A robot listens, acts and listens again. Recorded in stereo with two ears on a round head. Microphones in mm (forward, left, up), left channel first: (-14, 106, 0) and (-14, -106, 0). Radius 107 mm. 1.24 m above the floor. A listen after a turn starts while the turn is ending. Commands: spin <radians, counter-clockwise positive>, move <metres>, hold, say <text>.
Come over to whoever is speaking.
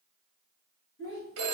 spin 0.96
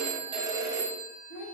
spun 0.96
spin 1.22
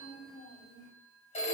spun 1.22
spin 0.44
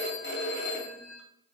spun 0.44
hold
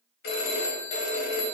hold
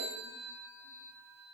say I heard a child speaking from this way, but can't make it out now. I did not reach it.